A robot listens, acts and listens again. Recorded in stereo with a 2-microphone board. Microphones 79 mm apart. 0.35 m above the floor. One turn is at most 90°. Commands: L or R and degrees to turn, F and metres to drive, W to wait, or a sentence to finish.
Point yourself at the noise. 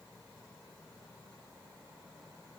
W
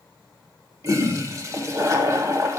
R40
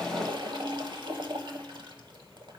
R90
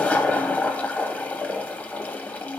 L20
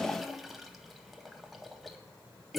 Facing the toilet flushing.